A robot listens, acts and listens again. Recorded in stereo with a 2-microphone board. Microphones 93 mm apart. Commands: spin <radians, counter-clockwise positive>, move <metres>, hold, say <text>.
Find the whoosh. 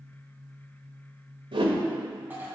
spin -1.22
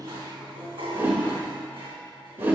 spin -0.44
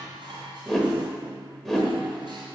say Facing the whoosh.